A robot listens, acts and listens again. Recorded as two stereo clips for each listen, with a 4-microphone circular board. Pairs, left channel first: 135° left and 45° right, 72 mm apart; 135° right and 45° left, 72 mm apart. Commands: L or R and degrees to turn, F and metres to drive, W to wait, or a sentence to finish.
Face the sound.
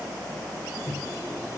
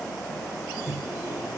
L100
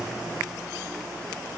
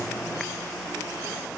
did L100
W
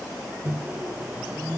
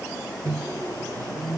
L20
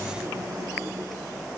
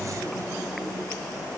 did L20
W
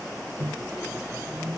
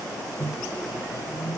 Found it: a microwave, straight ahead.